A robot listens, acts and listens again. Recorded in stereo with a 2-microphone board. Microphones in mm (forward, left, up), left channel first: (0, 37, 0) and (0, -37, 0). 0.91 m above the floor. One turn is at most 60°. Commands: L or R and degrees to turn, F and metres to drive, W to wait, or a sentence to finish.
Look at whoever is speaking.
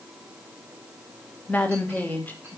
L25
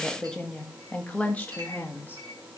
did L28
L25
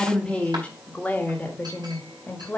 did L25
L30
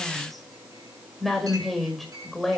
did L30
Facing the woman speaking, 1 to 2 m away.